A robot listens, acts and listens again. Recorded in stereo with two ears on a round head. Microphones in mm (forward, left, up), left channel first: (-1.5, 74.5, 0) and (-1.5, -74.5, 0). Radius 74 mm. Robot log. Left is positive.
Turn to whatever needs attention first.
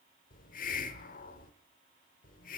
cmd idle
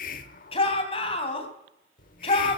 note: The shout: about 35° left or 145° left.
cmd yaw +35
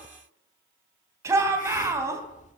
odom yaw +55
note: So it is at 20° right.
cmd yaw -20
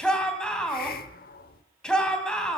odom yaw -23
end: Facing the shout.